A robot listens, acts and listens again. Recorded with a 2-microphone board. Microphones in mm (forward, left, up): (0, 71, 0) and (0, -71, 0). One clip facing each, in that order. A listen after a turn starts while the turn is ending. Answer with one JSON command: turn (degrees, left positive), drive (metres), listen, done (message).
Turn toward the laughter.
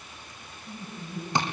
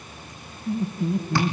{"turn": -65}
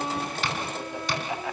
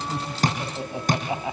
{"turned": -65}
{"turn": -20}
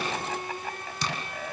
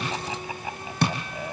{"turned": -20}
{"turn": -15}
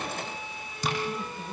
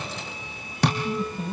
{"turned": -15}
{"turn": -15}
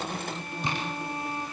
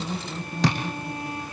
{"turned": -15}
{"done": "Found it: laughter, straight ahead."}